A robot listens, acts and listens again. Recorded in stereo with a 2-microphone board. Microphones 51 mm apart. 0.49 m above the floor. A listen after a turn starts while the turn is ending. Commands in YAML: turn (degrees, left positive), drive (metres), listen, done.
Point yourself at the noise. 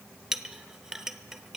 turn: -30
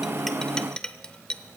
turn: 20
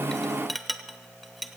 done: "Found it: a clink, straight ahead."